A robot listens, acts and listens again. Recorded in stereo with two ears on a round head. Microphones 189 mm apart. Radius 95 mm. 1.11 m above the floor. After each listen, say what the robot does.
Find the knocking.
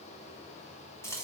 Keep listening.
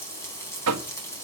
Turn 90° right.
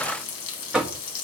Facing the knocking, 1 to 2 m away.